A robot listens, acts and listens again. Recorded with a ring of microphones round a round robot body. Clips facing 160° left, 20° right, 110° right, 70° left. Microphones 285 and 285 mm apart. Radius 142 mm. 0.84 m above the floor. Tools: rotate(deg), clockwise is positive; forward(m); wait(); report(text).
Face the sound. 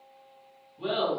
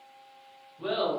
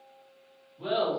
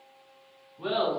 rotate(-150)
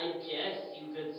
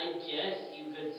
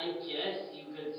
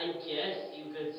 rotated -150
report("Found it: laughter, straight ahead.")